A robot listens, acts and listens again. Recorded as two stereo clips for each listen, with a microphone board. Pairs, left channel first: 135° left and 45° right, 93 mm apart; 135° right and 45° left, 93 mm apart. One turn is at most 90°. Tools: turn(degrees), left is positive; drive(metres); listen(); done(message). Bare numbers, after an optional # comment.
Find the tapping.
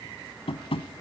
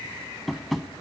# The tapping: 135° left.
turn(90)
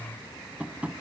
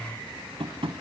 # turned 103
# The tapping is now 30° left.
turn(30)
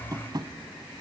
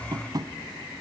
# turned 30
done("Facing the tapping.")